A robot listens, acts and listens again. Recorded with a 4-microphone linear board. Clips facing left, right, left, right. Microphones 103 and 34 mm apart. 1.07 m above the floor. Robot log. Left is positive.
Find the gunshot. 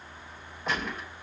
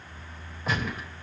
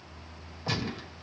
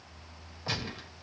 cmd yaw -30
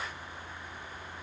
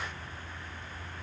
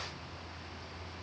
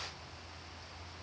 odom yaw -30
cmd idle
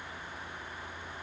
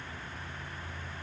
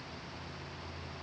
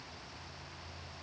end: I heard a gunshot, but can't make it out now. It was about 25° left or 145° right.